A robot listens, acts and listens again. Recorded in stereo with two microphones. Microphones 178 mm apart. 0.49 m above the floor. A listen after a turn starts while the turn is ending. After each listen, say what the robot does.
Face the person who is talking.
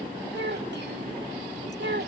Turn 90° right.
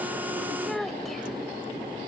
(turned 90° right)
Facing the child speaking.